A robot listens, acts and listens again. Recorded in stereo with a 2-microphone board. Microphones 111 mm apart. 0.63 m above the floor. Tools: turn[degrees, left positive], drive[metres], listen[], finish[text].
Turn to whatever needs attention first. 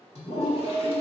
Thought: The alarm: about 50° left or 130° left.
Action: turn[50]
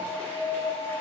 Thought: So it is at 75° left.
Action: turn[75]
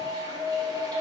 Thought: The alarm is now 20° left.
Action: turn[20]
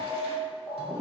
Action: finish[Facing the alarm.]